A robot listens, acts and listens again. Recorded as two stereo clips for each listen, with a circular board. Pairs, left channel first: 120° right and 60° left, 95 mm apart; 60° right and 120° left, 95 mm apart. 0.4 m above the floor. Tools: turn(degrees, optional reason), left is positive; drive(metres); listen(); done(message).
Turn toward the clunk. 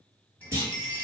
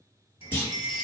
done("Found it: a clunk, straight ahead.")